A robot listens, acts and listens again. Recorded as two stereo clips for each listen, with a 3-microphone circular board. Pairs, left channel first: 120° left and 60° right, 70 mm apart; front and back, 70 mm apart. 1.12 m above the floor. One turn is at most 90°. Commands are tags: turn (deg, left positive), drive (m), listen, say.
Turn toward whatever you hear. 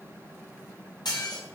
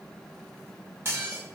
<turn deg="90"/>
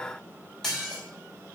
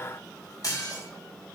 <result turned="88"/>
<turn deg="35"/>
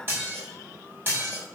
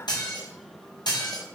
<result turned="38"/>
<say>Facing the dishes clattering, 2 to 4 m away.</say>